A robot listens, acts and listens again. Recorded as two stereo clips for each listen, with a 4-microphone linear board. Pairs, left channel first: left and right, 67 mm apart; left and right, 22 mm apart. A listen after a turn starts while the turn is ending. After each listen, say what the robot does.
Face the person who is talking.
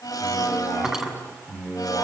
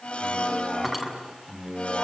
Turn 20° right.
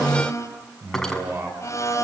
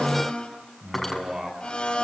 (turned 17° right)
Turn 40° right.
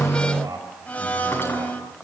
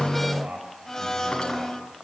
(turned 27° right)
Turn 115° right.
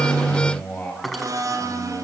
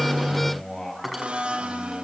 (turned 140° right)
Turn 25° left.
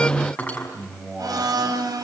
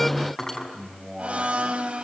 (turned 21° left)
Found it: a man speaking, straight ahead, over 4 m away.